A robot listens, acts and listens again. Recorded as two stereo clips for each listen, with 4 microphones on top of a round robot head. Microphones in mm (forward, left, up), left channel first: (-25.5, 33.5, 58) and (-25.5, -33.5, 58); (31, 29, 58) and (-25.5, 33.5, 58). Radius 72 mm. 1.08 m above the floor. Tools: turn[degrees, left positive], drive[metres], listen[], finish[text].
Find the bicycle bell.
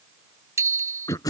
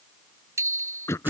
Thought: The bicycle bell: 140° right.
Action: turn[-140]
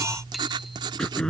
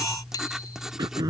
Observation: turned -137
Action: finish[Facing the bicycle bell.]